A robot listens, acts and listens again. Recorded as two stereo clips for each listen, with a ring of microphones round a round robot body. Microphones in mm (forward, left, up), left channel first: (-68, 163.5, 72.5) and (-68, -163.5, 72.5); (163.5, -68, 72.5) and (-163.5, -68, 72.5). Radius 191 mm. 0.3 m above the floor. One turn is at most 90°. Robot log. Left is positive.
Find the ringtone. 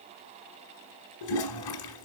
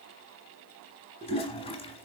cmd idle
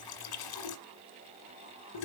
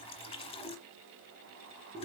cmd idle
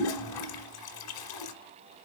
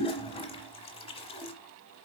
end: I can't make out a ringtone, only a toilet flushing.